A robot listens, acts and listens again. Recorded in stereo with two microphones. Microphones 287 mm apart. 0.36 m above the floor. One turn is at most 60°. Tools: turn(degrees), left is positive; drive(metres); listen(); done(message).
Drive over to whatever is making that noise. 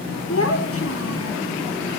turn(degrees=50)
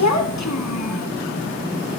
turn(degrees=60)
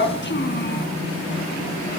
turn(degrees=40)
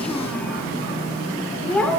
drive(metres=1.0)
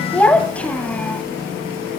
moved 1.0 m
drive(metres=1.0)
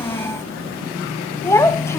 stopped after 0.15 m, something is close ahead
turn(degrees=10)
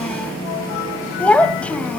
done("Arrived at the child speaking, straight ahead.")